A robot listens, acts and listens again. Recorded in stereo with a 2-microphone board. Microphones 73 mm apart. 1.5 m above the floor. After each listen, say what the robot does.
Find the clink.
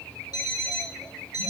Keep listening.
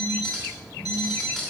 Turn 30° left.
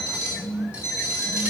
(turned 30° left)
Keep listening.
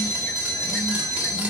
Keep listening.
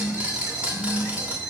Turn 20° right.
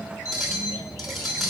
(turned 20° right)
Facing the clink, 1 to 2 m away.